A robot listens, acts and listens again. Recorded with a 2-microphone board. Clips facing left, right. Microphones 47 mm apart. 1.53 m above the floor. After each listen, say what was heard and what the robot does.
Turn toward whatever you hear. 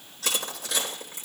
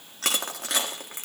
The crushing: about 60° right or 120° right. Turn 60° right.
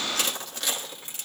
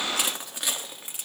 So it is at 15° right. Turn 15° right.
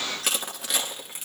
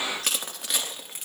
Facing the crushing.